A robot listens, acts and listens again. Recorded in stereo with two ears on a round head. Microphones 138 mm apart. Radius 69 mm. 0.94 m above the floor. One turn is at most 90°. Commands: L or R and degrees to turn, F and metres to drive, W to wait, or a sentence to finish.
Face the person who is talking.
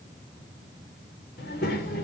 L65
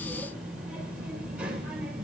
Facing the child speaking.